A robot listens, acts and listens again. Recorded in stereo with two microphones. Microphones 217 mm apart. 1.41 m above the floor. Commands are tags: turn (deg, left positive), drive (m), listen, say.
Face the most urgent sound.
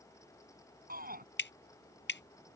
<turn deg="-40"/>
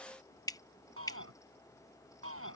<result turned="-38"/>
<turn deg="-100"/>
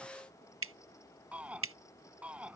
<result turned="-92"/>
<say>Found it: a shout, straight ahead.</say>